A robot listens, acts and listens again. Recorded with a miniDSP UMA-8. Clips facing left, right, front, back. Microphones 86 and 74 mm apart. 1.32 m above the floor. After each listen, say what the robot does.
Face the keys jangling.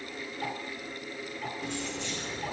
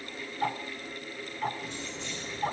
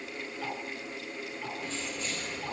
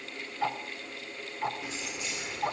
Turn 105° left.
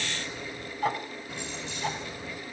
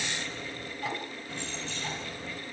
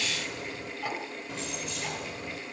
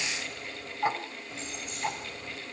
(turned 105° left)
Turn 15° left.
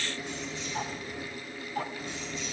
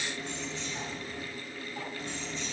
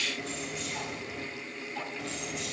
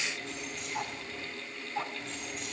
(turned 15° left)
Facing the keys jangling, over 4 m away.